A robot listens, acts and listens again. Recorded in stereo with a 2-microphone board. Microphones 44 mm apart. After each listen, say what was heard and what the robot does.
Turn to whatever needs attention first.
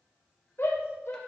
The shout: about 55° left or 125° left. Turn 55° left.
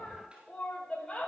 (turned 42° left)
So it is at 20° left. Turn 20° left.
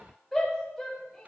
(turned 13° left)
Facing the shout.